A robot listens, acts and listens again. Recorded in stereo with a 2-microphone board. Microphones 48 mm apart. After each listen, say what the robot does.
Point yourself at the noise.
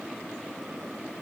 Keep listening.
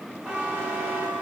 Turn 25° right.
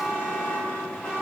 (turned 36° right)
Turn 10° left.
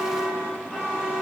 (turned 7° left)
Found it: a buzzer, straight ahead.